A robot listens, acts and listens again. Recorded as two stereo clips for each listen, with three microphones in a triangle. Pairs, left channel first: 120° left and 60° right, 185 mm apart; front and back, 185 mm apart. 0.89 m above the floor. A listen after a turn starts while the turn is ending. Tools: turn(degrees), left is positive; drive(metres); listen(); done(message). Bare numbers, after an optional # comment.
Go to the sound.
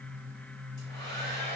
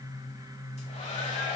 # The hair dryer: 50° left.
turn(50)
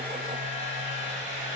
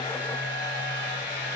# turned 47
drive(1.0)
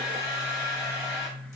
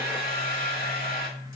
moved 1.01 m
# The hair dryer is now 15° left.
turn(15)
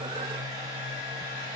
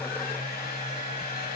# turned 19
drive(1.0)
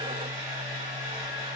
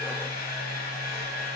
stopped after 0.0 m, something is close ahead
done("I am next to the hair dryer.")